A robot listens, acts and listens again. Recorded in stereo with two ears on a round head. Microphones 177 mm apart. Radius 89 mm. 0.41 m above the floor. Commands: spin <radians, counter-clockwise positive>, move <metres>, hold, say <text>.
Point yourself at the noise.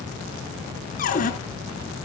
spin 0.79
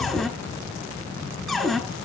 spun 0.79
say Found it: a cupboard door, straight ahead.